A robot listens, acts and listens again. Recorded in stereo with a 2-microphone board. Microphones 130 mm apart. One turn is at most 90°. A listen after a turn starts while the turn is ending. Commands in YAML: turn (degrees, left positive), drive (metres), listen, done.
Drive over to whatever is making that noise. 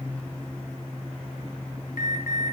turn: 90
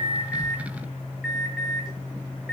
drive: 1.0
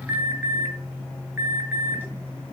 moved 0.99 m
turn: -15
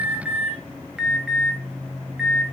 drive: 1.0
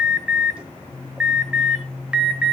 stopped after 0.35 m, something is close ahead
turn: -10
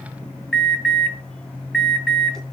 done: "I am next to the alarm."